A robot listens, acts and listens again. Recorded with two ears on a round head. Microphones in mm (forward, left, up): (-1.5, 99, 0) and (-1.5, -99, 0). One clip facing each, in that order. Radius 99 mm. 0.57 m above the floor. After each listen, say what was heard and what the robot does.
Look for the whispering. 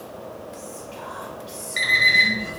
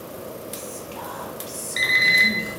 The whispering: about 65° right or 115° right. Turn 65° right.
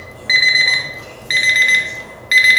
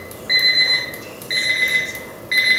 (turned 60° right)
Keep listening.
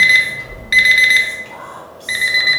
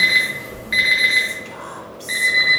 So it is at 30° right. Turn 30° right.
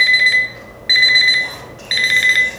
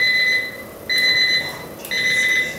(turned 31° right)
Keep listening.
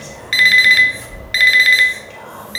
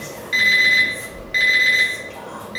Found it: whispering, straight ahead, 1 to 2 m away.